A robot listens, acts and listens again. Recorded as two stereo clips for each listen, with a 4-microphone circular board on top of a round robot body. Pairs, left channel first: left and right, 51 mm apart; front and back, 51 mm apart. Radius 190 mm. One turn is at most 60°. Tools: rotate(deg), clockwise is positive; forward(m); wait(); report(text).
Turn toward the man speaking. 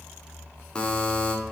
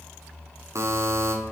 wait()
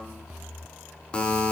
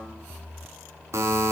wait()
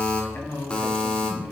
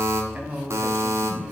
rotate(-60)
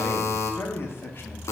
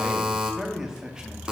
rotate(-60)
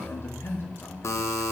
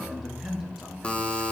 rotate(-60)
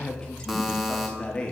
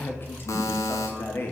rotate(-20)
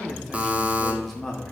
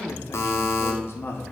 report("Facing the man speaking.")